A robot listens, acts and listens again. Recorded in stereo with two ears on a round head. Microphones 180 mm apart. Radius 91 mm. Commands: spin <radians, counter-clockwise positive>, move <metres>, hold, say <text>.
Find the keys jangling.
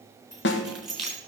spin 0.52
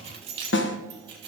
spin -0.44
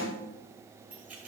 say Found it: keys jangling, straight ahead.